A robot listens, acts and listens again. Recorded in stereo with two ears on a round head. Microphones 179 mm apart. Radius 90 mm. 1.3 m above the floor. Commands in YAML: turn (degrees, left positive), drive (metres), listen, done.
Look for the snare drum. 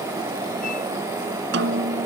turn: -55
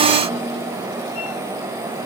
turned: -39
listen: true
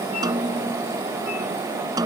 turn: -20
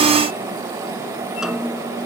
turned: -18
done: "Found it: a snare drum, straight ahead."